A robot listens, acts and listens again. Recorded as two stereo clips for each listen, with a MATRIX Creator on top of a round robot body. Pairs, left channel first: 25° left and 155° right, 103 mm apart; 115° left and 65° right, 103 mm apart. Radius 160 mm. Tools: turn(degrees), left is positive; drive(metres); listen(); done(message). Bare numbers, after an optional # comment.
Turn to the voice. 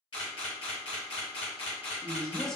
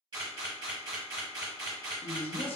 # The man speaking: 110° left.
turn(110)
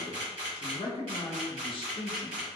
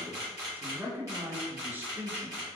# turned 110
done("Facing the man speaking.")